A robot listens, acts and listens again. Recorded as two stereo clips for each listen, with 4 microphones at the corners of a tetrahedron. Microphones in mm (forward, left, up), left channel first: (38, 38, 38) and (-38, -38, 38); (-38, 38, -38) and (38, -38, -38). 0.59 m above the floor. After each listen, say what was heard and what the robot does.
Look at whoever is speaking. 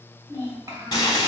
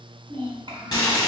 The child speaking: 80° right. Turn 80° right.
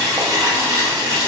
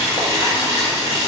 Keep listening.
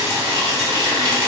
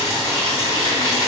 Keep listening.
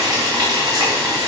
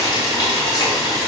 I heard a child speaking from this way, but can't make it out now.